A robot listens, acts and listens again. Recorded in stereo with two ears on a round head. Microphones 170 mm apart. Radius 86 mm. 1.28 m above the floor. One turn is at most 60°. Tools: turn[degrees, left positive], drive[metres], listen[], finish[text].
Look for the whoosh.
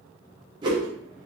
Thought: The whoosh: about 20° right or 160° right.
Action: turn[-20]
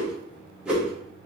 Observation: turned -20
Action: finish[Facing the whoosh, under 1 m away.]